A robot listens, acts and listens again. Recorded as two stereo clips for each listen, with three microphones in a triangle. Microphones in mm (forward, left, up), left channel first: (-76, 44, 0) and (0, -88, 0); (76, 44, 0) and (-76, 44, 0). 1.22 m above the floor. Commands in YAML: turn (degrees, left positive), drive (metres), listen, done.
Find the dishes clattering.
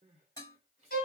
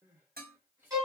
turn: -175
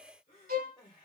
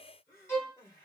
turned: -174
listen: true
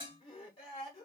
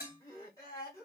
done: "Found it: dishes clattering, straight ahead, 1 to 2 m away."